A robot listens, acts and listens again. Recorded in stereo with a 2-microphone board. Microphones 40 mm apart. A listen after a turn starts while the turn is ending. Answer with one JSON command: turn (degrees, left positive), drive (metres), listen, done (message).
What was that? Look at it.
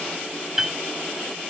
{"turn": -30}
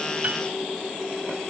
{"listen": true}
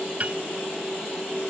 {"turn": -140}
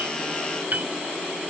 {"turn": -50}
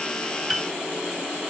{"done": "Facing the piano."}